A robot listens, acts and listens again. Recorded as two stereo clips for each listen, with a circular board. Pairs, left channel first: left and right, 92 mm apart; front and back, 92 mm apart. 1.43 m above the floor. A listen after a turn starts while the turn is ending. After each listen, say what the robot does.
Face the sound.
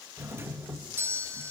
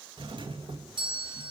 Turn 155° right.
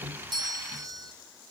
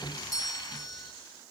Turn 40° right.
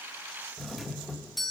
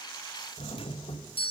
Found it: a doorbell, straight ahead.